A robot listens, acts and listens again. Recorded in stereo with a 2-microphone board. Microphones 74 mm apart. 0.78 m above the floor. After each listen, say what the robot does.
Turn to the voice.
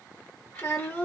Turn 30° left.
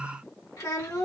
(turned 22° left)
Turn 130° left.
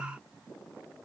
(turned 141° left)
Turn 15° right.
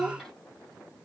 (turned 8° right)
Found it: a child speaking, straight ahead.